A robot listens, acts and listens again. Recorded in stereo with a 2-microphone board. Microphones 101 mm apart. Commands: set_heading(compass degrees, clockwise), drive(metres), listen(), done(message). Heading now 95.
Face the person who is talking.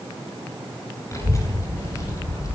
set_heading(60)
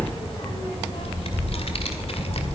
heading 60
set_heading(320)
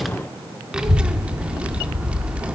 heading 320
set_heading(330)
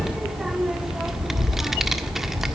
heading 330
done("Facing the child speaking, 1 to 2 m away.")